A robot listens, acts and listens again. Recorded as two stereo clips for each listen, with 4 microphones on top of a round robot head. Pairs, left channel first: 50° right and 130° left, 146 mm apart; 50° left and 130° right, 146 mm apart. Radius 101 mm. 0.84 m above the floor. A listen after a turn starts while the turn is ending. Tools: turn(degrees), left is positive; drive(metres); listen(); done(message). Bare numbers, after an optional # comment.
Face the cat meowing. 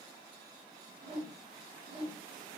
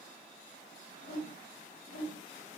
listen()
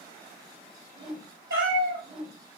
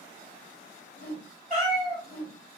# The cat meowing: 150° left.
turn(150)
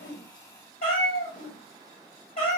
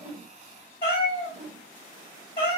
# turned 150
done("Facing the cat meowing.")